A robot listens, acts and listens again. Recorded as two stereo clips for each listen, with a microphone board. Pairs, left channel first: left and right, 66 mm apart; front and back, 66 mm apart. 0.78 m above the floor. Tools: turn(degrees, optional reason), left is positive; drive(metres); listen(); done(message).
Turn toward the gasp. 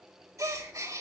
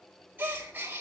turn(degrees=-120, reason="The gasp: 120° right.")
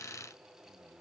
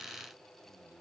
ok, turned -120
done("I heard a gasp from this way, but can't make it out now.")